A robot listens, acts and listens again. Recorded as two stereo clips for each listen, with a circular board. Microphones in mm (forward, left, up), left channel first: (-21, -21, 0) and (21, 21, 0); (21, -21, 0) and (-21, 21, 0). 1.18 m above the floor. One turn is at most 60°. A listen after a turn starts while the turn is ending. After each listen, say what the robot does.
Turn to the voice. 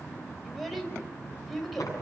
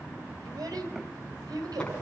Turn 60° left.
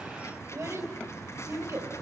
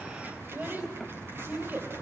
Turn 60° left.
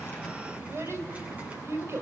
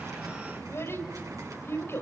Facing the child speaking.